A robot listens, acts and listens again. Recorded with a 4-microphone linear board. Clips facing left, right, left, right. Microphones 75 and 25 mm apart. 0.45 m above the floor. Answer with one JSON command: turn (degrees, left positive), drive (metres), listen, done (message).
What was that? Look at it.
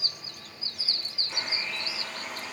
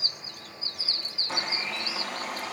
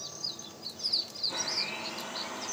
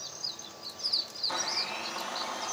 {"turn": -90}
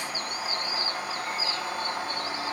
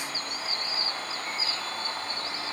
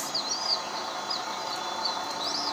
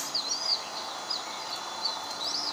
{"turn": 10}
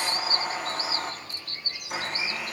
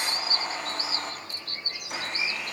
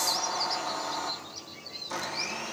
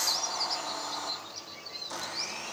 {"done": "Found it: a blender, straight ahead, 2 to 4 m away."}